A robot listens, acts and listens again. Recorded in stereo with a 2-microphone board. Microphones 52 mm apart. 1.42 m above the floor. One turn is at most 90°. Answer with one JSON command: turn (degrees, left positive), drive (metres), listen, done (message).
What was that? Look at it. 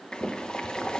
{"turn": 15}
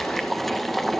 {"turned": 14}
{"done": "Facing the boiling."}